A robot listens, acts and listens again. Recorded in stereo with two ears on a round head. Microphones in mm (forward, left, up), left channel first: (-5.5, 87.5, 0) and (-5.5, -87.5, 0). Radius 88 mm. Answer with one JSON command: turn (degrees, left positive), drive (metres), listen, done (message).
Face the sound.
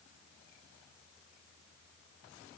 {"listen": true}
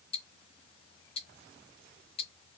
{"turn": 30}
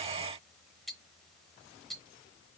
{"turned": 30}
{"done": "Found it: ticking, straight ahead, under 1 m away."}